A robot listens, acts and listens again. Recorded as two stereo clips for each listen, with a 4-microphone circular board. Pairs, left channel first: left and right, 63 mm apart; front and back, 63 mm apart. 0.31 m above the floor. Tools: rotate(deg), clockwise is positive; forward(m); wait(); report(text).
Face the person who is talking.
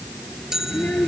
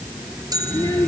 rotate(-25)
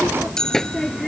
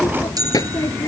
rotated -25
report("Found it: a child speaking, straight ahead.")